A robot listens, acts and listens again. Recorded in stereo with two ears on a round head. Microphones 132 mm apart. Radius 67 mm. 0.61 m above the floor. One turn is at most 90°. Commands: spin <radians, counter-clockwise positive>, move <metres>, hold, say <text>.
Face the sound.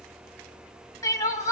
spin 0.44
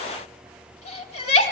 spin 1.57
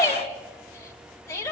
spin 0.35
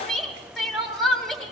say Found it: crying, straight ahead, 2 to 4 m away.